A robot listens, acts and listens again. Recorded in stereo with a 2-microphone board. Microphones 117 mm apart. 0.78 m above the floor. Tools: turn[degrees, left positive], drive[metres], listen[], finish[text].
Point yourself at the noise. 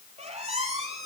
Thought: The squeak: about 65° right or 115° right.
Action: turn[-65]
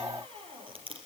Thought: So it is at 50° right.
Action: turn[-50]
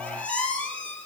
Thought: The squeak is now 10° left.
Action: turn[10]
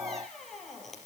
Action: finish[Found it: a squeak, straight ahead, over 4 m away.]